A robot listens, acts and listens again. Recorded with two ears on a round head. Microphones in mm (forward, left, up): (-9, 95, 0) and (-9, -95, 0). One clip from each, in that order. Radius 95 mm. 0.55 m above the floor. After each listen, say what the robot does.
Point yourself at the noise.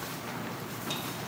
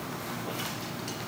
Keep listening.
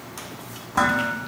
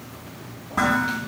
Turn 50° left.
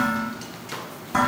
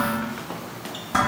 Facing the dishes clattering, 2 to 4 m away.